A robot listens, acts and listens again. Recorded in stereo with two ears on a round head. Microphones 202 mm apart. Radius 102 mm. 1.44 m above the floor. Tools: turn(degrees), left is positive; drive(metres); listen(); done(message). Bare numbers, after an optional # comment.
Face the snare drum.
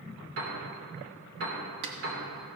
# The snare drum: about 55° right or 125° right.
turn(-55)
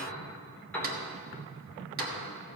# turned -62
listen()
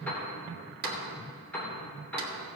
# So it is at 50° right.
turn(-50)
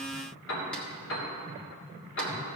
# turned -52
listen()
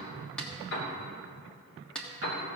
done("Facing the snare drum.")